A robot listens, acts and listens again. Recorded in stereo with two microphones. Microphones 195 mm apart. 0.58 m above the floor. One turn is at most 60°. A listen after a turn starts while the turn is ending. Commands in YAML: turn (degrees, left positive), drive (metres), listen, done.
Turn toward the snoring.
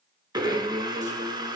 listen: true
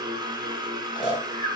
turn: 25
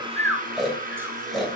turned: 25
done: "Found it: snoring, straight ahead."